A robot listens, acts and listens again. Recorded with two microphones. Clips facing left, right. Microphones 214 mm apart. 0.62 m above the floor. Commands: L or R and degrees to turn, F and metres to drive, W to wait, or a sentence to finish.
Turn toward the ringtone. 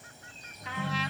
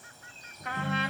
R90
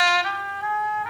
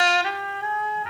W
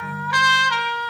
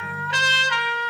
Found it: a ringtone, straight ahead.